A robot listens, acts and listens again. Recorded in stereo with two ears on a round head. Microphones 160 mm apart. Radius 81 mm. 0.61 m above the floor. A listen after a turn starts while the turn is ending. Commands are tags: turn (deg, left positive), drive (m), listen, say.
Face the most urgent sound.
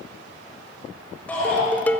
<turn deg="30"/>
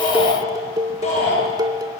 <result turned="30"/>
<turn deg="140"/>
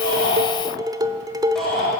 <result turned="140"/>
<say>Facing the shout.</say>